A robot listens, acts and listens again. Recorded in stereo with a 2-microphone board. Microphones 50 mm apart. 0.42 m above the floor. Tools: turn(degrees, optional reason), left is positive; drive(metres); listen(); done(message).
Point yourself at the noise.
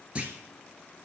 turn(degrees=-25, reason="The clunk: about 25° right or 155° right.")
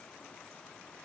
listen()
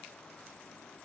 done("I heard a clunk, but can't make it out now. It was about straight ahead or 130° right.")